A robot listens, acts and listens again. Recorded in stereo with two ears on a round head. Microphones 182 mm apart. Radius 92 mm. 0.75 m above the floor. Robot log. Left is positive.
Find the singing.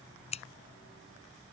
cmd idle
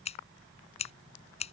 cmd idle
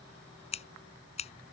end: I can't make out singing, only scissors.